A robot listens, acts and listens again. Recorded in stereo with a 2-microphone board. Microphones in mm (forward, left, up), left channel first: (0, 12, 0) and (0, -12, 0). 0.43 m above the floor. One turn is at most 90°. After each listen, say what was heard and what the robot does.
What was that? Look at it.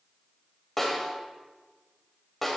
Turn 30° left.
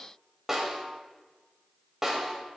So it is at 25° right. Turn 25° right.
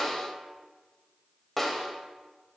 Facing the snare drum, 1 to 2 m away.